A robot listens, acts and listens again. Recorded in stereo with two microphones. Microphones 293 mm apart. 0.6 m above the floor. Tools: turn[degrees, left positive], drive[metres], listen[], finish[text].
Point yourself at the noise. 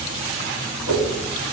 Thought: The whoosh: about 55° right or 125° right.
Action: turn[-55]
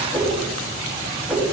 Action: finish[Found it: a whoosh, straight ahead.]